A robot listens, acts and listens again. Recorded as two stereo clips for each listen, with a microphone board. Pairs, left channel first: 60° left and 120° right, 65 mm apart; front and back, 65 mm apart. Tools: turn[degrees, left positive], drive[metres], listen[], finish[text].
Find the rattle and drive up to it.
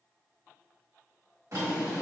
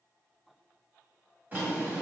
Action: listen[]
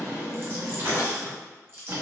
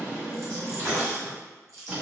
Thought: The rattle: 160° right.
Action: turn[-160]
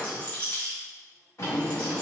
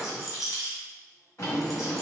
Thought: The rattle is now 10° right.
Action: turn[-10]
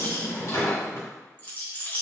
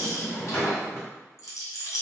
Action: drive[1.0]
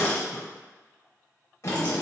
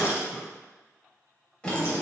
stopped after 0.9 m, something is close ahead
Action: listen[]
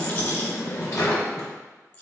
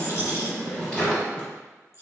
Action: finish[I am next to the rattle.]